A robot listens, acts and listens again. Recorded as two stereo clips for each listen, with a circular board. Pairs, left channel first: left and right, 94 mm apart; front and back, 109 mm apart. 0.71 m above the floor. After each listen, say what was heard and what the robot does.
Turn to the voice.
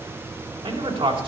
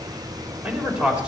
The man speaking: 100° right. Turn 100° right.
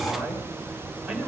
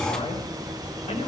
Found it: a man speaking, straight ahead, 2 to 4 m away.